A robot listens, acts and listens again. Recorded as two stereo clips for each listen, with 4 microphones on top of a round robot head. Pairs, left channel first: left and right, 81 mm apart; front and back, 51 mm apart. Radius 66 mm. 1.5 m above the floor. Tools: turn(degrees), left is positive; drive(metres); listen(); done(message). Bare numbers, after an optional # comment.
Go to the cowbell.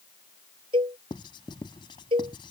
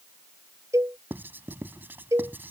# The cowbell: 130° right.
turn(-130)
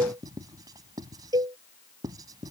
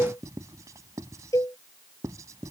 # The cowbell is now 45° right.
turn(-45)
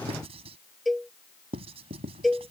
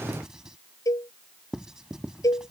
drive(1.0)
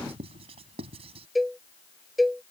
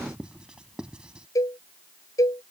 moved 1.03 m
drive(1.0)
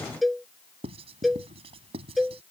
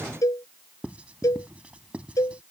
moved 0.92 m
drive(1.0)
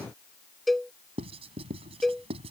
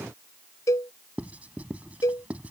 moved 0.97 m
drive(1.0)
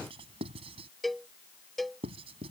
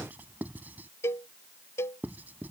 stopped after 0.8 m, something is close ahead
done("Arrived at the cowbell, straight ahead.")